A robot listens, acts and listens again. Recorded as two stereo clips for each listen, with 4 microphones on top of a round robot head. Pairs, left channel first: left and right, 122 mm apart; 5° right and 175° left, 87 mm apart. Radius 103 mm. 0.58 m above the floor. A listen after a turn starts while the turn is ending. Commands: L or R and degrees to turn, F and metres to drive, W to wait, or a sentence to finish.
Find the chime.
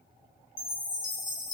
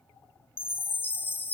L60
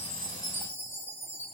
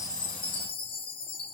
L15
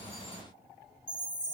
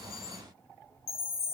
Facing the chime, under 1 m away.